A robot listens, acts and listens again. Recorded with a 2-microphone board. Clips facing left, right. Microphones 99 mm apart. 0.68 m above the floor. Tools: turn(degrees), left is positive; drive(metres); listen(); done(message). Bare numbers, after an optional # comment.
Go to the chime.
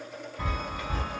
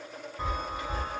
# The chime: about 20° right or 160° right.
turn(-20)
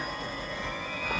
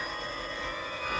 # So it is at 135° right.
turn(-135)
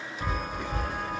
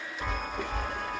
drive(1.0)
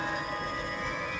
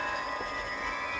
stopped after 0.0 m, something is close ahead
done("Blocked. The chime is further on, straight ahead.")